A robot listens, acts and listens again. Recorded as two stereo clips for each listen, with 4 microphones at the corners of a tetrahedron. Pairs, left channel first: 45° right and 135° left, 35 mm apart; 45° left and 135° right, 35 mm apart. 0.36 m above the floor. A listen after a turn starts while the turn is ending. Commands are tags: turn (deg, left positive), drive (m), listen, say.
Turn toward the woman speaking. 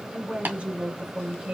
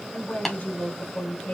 <turn deg="85"/>
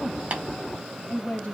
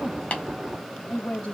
<turn deg="10"/>
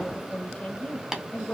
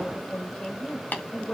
<turn deg="-25"/>
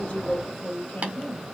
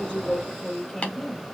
<turn deg="-35"/>
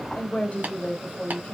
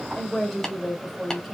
<turn deg="-40"/>
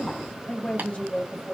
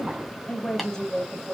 <turn deg="-15"/>
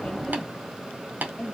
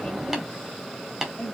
<say>Facing the woman speaking, 1 to 2 m away.</say>